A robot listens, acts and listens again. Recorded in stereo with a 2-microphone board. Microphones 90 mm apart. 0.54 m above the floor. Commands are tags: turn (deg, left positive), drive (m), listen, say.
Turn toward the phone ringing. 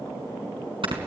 <listen/>
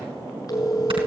<turn deg="40"/>
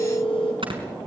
<turn deg="100"/>
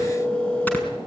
<turn deg="10"/>
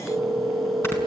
<say>Found it: a phone ringing, straight ahead.</say>